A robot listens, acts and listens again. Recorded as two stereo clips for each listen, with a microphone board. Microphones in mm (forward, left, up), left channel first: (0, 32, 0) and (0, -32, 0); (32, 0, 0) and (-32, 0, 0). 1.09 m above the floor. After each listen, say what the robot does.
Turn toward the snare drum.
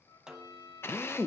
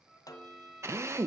Turn 10° right.
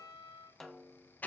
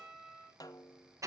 Found it: a snare drum, straight ahead.